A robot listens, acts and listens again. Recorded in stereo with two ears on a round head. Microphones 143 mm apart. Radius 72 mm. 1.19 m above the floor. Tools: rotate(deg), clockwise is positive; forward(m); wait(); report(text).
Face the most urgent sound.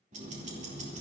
wait()
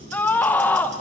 rotate(-30)
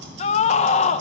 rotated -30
rotate(-135)
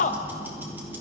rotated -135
rotate(-45)
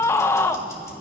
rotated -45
rotate(-15)
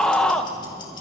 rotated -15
report("Found it: a scream, straight ahead, under 1 m away.")